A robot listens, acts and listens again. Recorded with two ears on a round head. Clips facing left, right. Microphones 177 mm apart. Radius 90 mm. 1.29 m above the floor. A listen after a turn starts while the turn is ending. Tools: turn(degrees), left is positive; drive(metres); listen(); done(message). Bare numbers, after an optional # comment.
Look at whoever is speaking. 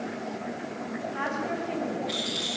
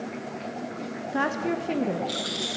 # The woman speaking: about 60° right or 120° right.
turn(-60)
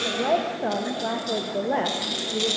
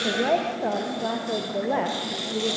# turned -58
done("Found it: a woman speaking, straight ahead.")